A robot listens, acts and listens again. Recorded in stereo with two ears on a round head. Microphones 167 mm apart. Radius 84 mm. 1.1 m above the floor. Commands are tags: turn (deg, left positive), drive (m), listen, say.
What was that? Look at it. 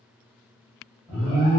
<turn deg="-20"/>
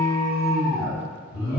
<say>Found it: an alarm, straight ahead.</say>